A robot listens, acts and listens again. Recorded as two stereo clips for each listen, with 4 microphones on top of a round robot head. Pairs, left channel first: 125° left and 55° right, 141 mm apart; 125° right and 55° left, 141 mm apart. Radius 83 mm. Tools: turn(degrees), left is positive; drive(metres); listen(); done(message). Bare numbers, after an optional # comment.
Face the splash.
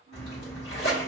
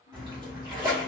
# The splash: 115° left.
turn(115)
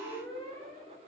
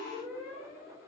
done("I heard a splash from this way, but can't make it out now.")